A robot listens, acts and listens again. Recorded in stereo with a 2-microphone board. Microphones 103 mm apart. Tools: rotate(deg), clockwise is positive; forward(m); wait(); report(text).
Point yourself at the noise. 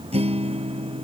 rotate(90)
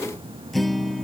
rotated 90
report("Found it: a guitar, straight ahead.")